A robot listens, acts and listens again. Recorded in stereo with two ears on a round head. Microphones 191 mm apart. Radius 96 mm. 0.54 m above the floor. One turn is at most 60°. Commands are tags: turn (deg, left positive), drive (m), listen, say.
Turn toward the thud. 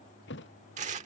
<turn deg="55"/>
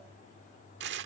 <listen/>
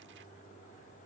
<say>I heard a thud, but can't make it out now. It was about straight ahead or 70° left.</say>